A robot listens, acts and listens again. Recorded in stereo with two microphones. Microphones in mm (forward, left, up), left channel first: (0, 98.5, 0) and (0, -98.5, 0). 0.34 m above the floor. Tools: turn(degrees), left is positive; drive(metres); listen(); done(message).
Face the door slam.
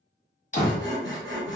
turn(degrees=45)
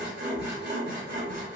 listen()
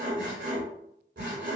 done("I heard a door slam, but can't make it out now. It was about straight ahead or 90° left.")